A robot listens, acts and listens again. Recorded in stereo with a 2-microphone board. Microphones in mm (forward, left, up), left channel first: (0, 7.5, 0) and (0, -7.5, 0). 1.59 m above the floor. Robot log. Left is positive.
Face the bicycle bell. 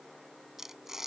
cmd idle
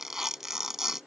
cmd idle
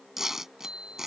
cmd yaw -90
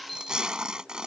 note: So it is at 10° left.
cmd yaw +10
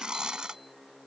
cmd idle
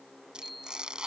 end: Facing the bicycle bell.